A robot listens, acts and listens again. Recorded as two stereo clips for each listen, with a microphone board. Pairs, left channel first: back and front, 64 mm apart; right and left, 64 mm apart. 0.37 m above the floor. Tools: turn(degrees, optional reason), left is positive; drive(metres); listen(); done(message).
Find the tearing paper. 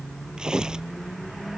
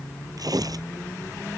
turn(degrees=80, reason="The tearing paper: 80° left.")
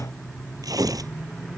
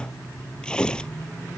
turn(degrees=-15, reason="The tearing paper is now 15° right.")
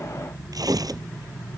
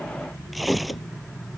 done("Found it: tearing paper, straight ahead.")